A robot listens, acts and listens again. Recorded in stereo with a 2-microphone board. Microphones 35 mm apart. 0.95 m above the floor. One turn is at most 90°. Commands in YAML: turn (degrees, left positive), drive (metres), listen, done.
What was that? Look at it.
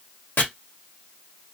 turn: 70
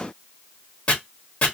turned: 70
turn: 35
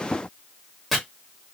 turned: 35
done: "Found it: chopping, straight ahead."